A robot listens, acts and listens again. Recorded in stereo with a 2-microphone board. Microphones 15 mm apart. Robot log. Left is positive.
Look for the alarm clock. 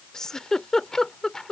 cmd idle
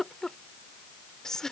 cmd idle
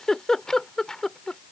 end: I can't make out an alarm clock to turn to.